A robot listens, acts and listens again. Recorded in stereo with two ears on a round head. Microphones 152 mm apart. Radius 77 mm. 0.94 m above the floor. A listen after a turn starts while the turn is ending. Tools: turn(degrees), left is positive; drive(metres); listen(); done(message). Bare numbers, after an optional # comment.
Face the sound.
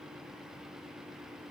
listen()
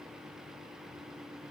listen()
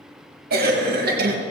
# The cough: about 60° right or 120° right.
turn(-60)
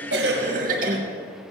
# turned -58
# So it is at 55° right.
turn(-55)
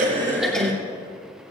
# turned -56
done("Facing the cough, 1 to 2 m away.")